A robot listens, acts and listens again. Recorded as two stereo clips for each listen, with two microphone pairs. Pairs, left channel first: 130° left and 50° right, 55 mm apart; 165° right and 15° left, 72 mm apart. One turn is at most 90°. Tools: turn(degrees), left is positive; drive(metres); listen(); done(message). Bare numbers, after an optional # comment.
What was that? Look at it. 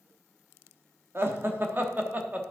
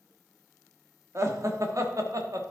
done("Facing the laughter, 1 to 2 m away.")